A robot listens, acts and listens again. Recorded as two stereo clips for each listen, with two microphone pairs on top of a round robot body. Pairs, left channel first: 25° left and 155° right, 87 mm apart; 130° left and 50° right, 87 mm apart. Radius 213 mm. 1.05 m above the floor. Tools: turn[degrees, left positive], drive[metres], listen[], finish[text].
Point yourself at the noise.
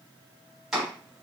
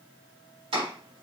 Thought: The chopping: 70° right.
Action: turn[-70]
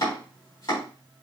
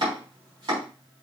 Thought: The chopping is now 15° right.
Action: turn[-15]
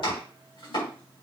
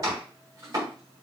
Action: finish[Found it: chopping, straight ahead, 2 to 4 m away.]